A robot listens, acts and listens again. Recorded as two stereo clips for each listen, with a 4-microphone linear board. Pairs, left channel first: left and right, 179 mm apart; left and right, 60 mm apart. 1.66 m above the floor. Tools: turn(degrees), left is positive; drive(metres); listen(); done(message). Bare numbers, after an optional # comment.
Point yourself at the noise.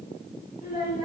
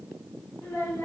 # The child speaking: about 60° left or 120° left.
turn(60)
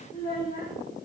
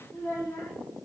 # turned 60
# So it is at 45° left.
turn(45)
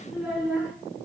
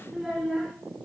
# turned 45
done("Found it: a child speaking, straight ahead.")